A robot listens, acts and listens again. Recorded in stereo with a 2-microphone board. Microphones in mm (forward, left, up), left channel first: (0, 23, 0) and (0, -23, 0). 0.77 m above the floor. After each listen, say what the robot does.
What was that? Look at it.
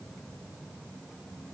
Keep listening.
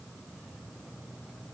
Keep listening.
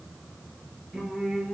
Turn 15° right.
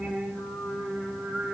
Turn 30° right.
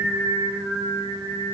Turn 120° right.
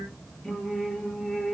Turn 10° left.
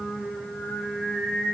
Found it: singing, straight ahead, over 4 m away.